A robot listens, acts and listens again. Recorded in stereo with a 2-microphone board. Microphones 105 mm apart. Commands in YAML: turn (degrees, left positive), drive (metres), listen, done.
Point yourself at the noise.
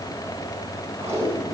turn: -90
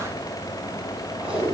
turn: -10
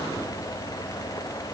listen: true
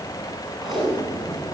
done: "Facing the tape being pulled."